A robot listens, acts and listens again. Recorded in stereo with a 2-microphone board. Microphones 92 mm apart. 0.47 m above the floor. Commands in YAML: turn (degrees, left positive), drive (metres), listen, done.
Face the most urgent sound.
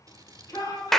turn: 40
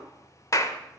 listen: true
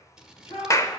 turn: 95
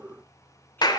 listen: true
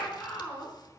turn: 20
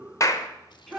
done: "Found it: a shout, straight ahead."